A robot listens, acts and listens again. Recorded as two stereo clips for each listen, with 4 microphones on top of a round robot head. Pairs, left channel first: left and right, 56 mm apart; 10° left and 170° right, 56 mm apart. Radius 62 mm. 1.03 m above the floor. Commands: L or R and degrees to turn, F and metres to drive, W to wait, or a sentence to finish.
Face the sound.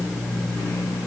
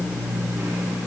W
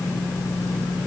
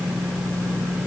W
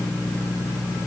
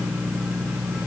I can't make out anything to turn to.